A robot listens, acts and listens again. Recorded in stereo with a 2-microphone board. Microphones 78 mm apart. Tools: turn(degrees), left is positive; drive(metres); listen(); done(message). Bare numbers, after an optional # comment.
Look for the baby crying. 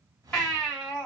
# The baby crying: about 15° left or 165° left.
turn(15)
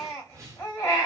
# So it is at 150° left.
turn(150)
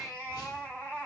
# The baby crying is now 30° left.
turn(30)
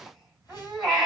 # The baby crying is now 10° right.
turn(-10)
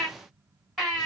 done("Facing the baby crying.")